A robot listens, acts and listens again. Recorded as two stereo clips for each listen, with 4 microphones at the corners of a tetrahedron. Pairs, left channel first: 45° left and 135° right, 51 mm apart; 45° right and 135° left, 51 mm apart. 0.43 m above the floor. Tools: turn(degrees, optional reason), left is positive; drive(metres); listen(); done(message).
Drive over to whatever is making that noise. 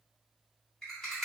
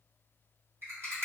turn(degrees=125, reason="The rattle: 125° left.")
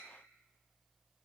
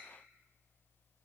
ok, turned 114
turn(degrees=10, reason="Nothing new. It was at 10° left.")
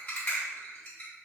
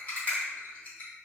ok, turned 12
drive(metres=1.0)
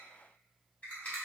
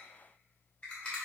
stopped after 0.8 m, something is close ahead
done("Arrived at the rattle, straight ahead.")